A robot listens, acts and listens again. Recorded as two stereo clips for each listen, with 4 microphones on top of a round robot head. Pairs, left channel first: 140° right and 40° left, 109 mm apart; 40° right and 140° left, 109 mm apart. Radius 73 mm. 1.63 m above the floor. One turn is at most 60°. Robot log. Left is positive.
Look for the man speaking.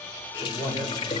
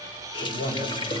note: The man speaking: 45° right.
cmd yaw -45
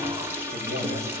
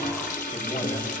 cmd idle
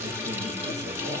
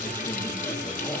cmd idle
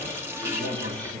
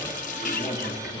note: The man speaking is now 15° left.
cmd yaw +15
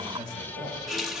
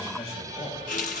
end: Facing the man speaking.